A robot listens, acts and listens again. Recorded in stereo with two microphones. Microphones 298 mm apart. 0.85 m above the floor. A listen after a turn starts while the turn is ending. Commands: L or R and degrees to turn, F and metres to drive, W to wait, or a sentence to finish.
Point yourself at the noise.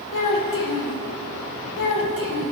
L90
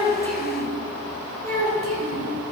R30
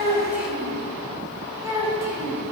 R10
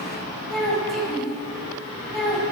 Found it: a child speaking, straight ahead.